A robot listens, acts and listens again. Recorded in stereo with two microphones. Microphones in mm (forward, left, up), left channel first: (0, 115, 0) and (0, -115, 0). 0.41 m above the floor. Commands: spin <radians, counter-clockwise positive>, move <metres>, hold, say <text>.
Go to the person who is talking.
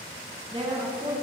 spin -0.44
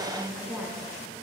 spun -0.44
move 1.0
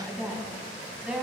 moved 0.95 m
move 1.0
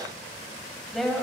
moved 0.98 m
move 1.0
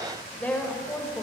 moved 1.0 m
spin 0.17
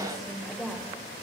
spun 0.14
move 1.0
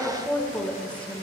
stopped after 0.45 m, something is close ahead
spin 0.17
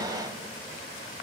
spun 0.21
hold
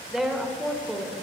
say I am next to the woman speaking.